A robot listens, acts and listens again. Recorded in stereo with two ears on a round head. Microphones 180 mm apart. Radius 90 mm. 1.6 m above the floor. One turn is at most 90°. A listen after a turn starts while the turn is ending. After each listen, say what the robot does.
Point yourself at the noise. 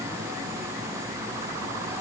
Keep listening.
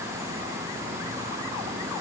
Keep listening.
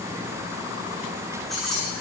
Turn 30° left.
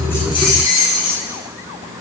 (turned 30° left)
Turn 90° left.
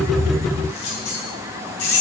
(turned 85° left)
Turn 55° left.
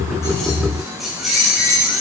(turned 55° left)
Found it: keys jangling, straight ahead, over 4 m away.